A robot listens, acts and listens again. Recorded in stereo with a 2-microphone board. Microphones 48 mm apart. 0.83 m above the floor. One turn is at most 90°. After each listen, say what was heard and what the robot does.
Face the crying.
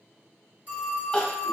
The crying: about 20° left or 160° left. Turn 20° left.
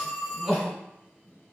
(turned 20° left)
Facing the crying, 1 to 2 m away.